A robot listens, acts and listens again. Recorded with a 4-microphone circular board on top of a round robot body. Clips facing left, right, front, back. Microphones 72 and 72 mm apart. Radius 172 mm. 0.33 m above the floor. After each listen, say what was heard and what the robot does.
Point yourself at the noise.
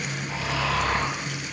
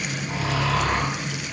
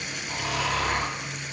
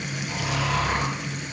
The snoring: 40° right. Turn 40° right.
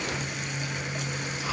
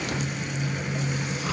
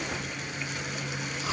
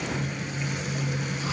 Keep listening.
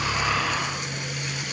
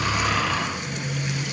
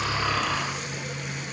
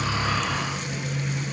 The snoring is now 10° left. Turn 10° left.
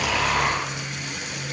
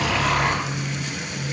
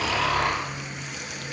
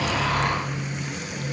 Facing the snoring, 2 to 4 m away.